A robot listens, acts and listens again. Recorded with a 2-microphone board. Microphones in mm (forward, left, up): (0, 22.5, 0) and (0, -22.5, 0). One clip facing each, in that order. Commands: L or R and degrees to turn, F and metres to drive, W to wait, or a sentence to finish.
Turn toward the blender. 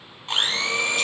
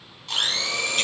L30
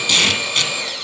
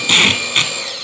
Found it: a blender, straight ahead.